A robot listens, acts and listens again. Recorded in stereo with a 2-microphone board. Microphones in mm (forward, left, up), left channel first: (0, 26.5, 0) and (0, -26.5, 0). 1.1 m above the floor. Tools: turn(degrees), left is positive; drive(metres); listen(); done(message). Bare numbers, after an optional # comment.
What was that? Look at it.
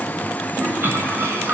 # The toilet flushing: about 40° right or 140° right.
turn(-40)
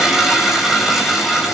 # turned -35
done("Found it: a toilet flushing, straight ahead, over 4 m away.")